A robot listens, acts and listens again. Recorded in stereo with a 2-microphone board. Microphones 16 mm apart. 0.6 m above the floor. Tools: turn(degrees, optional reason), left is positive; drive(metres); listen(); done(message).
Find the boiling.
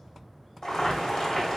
turn(degrees=35, reason="The boiling: about 35° left or 145° left.")
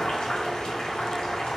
turn(degrees=105, reason="So it is at 105° left.")
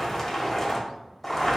turn(degrees=15, reason="The boiling is now 15° left.")
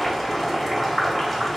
done("Found it: boiling, straight ahead, 1 to 2 m away.")